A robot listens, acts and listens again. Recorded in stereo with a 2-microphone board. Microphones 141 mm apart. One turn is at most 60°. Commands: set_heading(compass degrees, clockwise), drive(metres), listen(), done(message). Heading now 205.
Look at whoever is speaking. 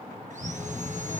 set_heading(165)
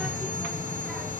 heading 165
done("Found it: a child speaking, straight ahead, 1 to 2 m away.")